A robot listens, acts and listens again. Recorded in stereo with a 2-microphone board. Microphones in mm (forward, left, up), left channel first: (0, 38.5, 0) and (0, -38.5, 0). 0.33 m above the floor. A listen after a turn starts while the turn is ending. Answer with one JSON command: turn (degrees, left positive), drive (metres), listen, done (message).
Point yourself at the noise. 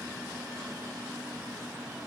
{"listen": true}
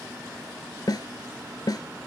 {"turn": 65}
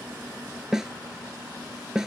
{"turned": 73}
{"done": "Found it: a snare drum, straight ahead."}